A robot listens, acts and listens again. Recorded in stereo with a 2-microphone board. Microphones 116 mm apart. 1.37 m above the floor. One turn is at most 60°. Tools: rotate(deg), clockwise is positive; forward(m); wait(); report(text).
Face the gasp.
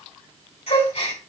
rotate(-60)
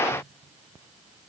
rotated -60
wait()
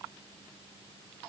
report("I heard a gasp, but can't make it out now. It was about 5° left or 55° left.")